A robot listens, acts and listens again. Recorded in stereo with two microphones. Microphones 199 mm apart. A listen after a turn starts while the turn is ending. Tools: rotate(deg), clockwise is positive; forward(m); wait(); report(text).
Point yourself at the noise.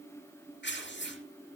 rotate(-65)
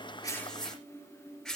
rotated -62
report("Facing the tearing paper.")